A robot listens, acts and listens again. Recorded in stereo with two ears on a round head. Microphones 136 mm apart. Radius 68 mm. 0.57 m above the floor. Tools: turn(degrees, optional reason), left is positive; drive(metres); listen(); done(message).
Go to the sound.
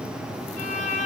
turn(degrees=50, reason="The violin: about 50° left or 130° left.")
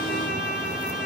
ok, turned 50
turn(degrees=80, reason="So it is at 80° left.")
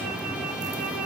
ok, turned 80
drive(metres=1.0)
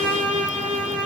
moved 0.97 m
turn(degrees=-15, reason="The violin is now 15° right.")
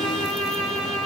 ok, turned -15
drive(metres=1.0)
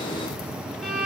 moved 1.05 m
drive(metres=1.0)
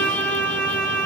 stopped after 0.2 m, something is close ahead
turn(degrees=10, reason="The violin is now 10° left.")
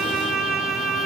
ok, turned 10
done("I am next to the violin.")